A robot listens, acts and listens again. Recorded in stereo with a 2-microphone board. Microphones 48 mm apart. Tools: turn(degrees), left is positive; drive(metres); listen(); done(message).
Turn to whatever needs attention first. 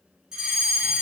turn(degrees=-30)
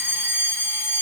turn(degrees=-140)
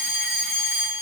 turn(degrees=-20)
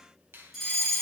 done("Found it: a fire alarm, straight ahead.")